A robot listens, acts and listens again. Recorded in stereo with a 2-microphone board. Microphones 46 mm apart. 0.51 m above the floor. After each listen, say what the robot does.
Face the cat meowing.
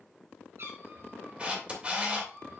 Turn 65° right.
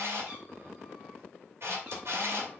Keep listening.
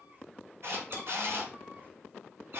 Turn 50° right.
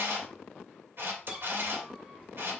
Turn 25° right.
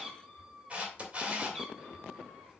Found it: a cat meowing, straight ahead, over 4 m away.